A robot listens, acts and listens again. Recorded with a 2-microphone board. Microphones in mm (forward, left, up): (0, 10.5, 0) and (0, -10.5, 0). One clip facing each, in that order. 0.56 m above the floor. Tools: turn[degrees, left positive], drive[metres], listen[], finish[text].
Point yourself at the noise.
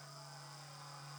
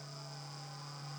Action: listen[]
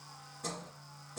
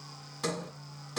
Action: turn[-90]
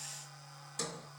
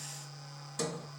Thought: So it is at 10° right.
Action: turn[-10]
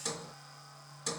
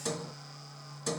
Action: finish[Found it: a sliding door, straight ahead, 2 to 4 m away.]